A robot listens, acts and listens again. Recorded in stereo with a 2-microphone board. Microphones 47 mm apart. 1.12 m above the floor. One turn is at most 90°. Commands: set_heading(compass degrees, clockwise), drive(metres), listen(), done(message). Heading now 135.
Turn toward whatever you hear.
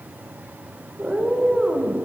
set_heading(165)
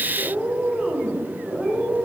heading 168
set_heading(138)
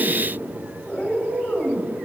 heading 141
set_heading(51)
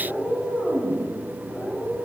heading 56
set_heading(11)
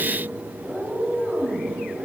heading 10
done("Found it: a cat meowing, straight ahead.")